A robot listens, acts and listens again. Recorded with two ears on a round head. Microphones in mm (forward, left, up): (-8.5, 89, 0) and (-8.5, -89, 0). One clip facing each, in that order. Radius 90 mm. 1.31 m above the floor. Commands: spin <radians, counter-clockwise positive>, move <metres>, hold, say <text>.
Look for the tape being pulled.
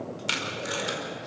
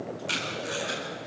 spin 1.22
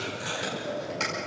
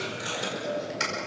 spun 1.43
spin -0.26
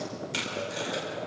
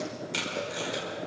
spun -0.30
say Found it: tape being pulled, straight ahead.